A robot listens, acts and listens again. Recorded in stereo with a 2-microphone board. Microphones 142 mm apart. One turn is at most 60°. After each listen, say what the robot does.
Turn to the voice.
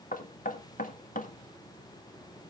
Keep listening.
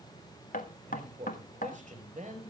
Turn 60° right.
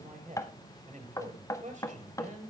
Turn 60° right.
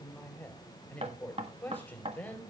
Turn 10° left.
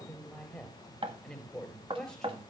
Found it: a man speaking, straight ahead.